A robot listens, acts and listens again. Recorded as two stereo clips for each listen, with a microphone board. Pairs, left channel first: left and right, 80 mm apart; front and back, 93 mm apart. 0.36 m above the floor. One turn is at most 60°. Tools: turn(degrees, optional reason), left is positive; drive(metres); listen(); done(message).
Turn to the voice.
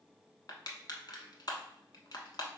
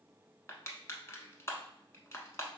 listen()
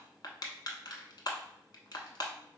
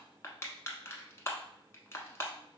listen()
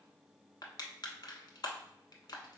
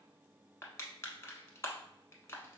done("I can't make out anyone speaking, only crushing.")